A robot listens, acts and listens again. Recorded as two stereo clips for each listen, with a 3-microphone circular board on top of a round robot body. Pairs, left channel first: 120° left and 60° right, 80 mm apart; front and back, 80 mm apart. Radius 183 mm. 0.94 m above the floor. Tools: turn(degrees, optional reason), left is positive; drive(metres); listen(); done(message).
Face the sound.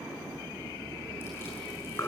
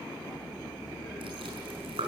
turn(degrees=-175, reason="The chewing: 175° right.")
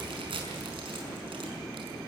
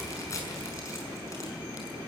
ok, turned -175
turn(degrees=-50, reason="The chewing is now 50° right.")
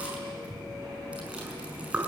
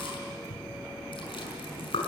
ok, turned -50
turn(degrees=15, reason="The chewing is now 15° left.")
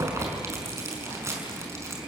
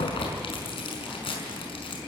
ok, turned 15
done("Facing the chewing.")